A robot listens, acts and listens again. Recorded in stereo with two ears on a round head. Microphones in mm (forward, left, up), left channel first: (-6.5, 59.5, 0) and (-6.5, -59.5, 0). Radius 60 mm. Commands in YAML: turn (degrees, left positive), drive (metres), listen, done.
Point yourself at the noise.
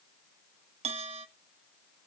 turn: -50
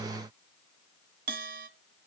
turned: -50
turn: -75
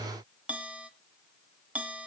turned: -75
turn: -10
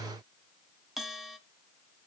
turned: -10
done: "Found it: a bell, straight ahead, under 1 m away."